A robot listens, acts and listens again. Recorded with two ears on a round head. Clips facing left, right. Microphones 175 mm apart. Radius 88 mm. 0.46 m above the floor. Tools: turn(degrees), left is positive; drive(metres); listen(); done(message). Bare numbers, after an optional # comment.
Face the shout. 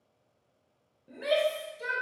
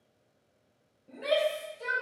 turn(30)
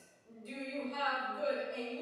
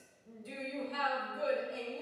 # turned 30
# So it is at 15° right.
turn(-15)
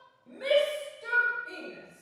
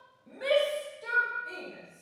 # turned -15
done("Facing the shout, 1 to 2 m away.")